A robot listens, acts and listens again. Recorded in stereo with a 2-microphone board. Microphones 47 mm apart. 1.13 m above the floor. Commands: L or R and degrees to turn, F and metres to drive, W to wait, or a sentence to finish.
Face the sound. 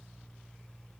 W
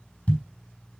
L35
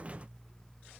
W
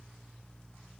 I heard a thud, but can't make it out now. It was about straight ahead or 110° left.